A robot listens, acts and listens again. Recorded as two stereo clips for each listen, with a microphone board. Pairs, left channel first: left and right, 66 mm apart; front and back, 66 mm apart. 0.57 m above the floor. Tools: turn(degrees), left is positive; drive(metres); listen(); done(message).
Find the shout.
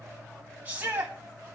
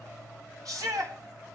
turn(degrees=-155)
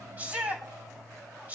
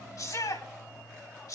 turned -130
turn(degrees=-25)
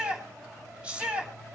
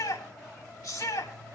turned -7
turn(degrees=-20)
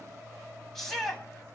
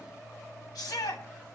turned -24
done("Facing the shout, over 4 m away.")